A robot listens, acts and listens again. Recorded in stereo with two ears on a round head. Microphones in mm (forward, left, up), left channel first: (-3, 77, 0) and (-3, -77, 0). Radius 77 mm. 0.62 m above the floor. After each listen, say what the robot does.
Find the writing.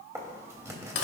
Turn 20° right.
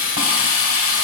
Keep listening.
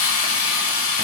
Keep listening.
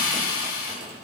I heard writing, but can't make it out now. It was about straight ahead or 140° right.